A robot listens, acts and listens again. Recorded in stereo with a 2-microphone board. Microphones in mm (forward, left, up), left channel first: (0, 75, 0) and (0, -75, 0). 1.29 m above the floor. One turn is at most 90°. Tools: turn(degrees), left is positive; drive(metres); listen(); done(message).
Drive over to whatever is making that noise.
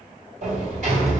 turn(degrees=-60)
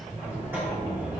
turn(degrees=-15)
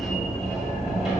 drive(metres=1.0)
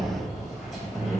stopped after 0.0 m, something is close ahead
done("Blocked. The sliding door is further on, straight ahead.")